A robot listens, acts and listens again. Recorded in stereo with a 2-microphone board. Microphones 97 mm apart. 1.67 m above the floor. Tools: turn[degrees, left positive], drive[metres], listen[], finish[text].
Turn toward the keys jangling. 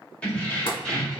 Action: turn[30]
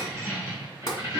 Thought: So it is at 35° right.
Action: turn[-35]
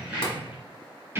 Thought: The keys jangling is now 25° right.
Action: turn[-25]
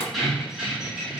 Thought: The keys jangling is now 10° right.
Action: turn[-10]
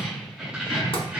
Thought: The keys jangling is now 15° right.
Action: turn[-15]
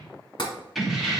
Action: finish[Facing the keys jangling.]